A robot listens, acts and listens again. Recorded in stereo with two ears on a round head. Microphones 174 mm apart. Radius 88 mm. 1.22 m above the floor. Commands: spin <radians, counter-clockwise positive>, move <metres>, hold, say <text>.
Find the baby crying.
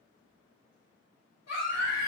spin 0.87
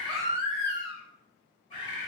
say Facing the baby crying, 2 to 4 m away.